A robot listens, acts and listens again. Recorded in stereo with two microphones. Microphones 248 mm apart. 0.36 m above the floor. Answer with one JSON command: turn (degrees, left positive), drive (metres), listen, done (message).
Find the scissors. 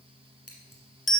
{"turn": 70}
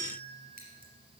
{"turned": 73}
{"listen": true}
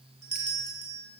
{"listen": true}
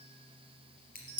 {"turn": 40}
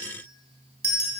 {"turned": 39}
{"listen": true}
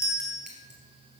{"listen": true}
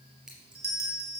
{"done": "Facing the scissors."}